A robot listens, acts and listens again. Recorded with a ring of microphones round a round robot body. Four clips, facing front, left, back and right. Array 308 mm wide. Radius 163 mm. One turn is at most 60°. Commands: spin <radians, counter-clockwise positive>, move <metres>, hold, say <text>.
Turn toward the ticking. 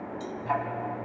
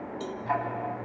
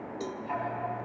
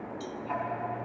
spin 0.87
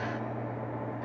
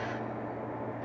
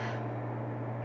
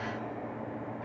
say Found it: ticking, straight ahead, over 4 m away.